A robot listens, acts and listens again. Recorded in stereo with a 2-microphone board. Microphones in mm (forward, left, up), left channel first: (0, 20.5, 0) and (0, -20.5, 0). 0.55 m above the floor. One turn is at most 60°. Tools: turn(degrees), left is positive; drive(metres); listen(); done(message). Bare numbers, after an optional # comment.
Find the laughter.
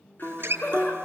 # The laughter: about 45° left or 135° left.
turn(45)
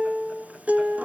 listen()
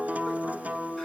listen()
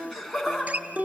done("Facing the laughter.")